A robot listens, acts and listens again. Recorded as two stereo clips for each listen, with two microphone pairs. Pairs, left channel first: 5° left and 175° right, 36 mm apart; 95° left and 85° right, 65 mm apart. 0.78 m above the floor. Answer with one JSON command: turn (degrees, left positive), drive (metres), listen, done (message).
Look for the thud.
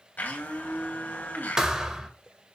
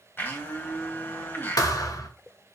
{"turn": 115}
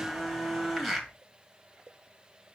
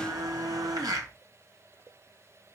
{"done": "I heard a thud from this way, but can't make it out now."}